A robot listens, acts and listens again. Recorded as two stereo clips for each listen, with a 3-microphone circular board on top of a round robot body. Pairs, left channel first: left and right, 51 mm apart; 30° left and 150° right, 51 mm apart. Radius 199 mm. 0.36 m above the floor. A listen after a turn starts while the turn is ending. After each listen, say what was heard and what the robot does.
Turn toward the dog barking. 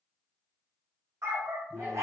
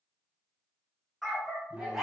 The dog barking: 70° right. Turn 70° right.
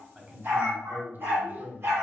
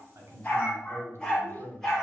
The dog barking is now 55° right. Turn 55° right.
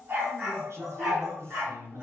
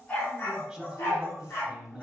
The dog barking is now 20° right. Turn 20° right.
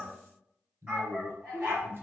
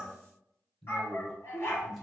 The dog barking is now 15° right. Turn 15° right.
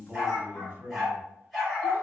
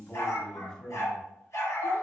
Found it: a dog barking, straight ahead, 2 to 4 m away.